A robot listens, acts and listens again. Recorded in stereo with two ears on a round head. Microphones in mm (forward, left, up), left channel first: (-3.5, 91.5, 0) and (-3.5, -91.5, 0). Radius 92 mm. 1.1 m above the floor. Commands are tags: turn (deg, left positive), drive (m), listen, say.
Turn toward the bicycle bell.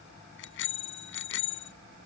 <turn deg="65"/>
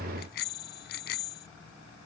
<turn deg="50"/>
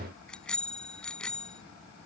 <say>Found it: a bicycle bell, straight ahead.</say>